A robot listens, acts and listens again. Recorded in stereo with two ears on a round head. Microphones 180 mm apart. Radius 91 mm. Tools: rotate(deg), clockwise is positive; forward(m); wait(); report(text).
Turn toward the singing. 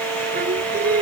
rotate(45)
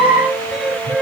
report("Facing the singing.")